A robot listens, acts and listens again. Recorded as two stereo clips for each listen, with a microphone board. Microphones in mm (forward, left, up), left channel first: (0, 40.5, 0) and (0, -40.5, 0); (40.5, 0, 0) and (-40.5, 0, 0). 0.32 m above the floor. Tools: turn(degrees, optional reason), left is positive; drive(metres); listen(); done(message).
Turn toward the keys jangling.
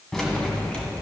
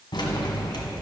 turn(degrees=10, reason="The keys jangling: 10° left.")
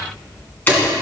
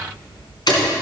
turn(degrees=25, reason="The keys jangling is now 25° left.")
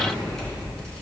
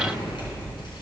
listen()
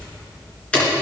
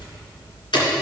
turn(degrees=15, reason="The keys jangling is now 15° left.")
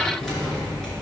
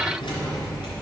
done("Facing the keys jangling.")